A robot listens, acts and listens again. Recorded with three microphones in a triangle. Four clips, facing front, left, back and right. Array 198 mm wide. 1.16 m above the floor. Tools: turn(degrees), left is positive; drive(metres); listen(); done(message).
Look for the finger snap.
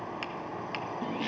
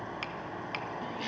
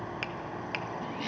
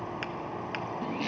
turn(degrees=-165)
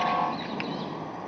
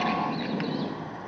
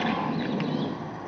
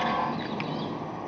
listen()
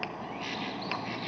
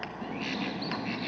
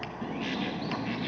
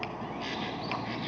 turn(degrees=15)
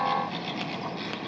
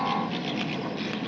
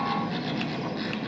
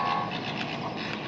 listen()
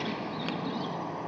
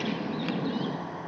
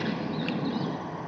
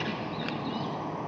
listen()
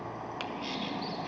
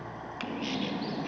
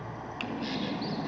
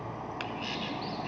done("Found it: a finger snap, straight ahead, under 1 m away.")